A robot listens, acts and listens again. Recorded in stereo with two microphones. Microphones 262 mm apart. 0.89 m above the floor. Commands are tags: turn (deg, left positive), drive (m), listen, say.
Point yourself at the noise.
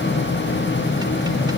<listen/>
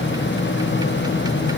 <listen/>
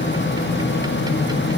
<say>I can't make out anything.</say>